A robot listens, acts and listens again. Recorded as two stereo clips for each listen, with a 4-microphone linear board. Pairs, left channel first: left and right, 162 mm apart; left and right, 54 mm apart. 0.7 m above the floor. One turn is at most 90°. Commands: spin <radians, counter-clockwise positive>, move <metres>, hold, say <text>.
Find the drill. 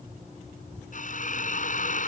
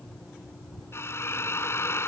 spin 0.96
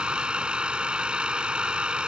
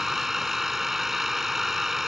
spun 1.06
say Facing the drill.